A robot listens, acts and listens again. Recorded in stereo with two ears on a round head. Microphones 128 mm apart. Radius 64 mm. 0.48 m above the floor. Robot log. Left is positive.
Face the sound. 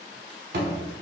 note: The thud: about 75° right or 105° right.
cmd yaw -75
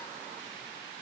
cmd idle
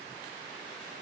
end: I heard a thud, but can't make it out now. It was about straight ahead or 30° right.